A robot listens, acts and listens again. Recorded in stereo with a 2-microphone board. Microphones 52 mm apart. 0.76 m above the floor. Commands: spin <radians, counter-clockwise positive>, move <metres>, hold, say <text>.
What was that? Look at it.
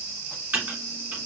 spin -0.52
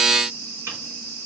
spin -2.09
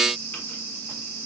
hold
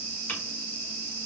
spin 0.61
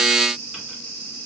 hold
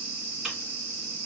hold
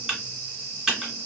spin -0.26
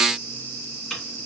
say Found it: typing on a keyboard, straight ahead, 1 to 2 m away.